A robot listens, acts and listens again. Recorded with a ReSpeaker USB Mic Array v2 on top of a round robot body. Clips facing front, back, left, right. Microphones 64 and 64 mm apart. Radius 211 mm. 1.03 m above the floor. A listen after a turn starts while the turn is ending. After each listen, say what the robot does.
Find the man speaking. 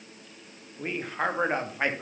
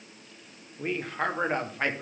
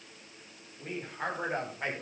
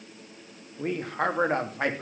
Turn 80° right.
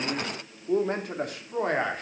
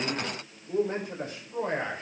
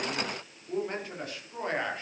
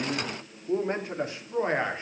Turn 25° right.
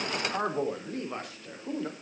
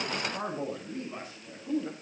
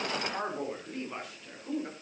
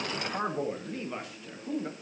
Found it: a man speaking, straight ahead, over 4 m away.